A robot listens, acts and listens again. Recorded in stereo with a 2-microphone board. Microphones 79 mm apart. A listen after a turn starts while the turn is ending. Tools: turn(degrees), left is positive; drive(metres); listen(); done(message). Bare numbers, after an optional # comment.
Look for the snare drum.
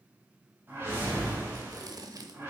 listen()
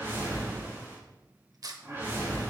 listen()
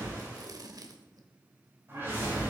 done("I can't make out a snare drum to turn to.")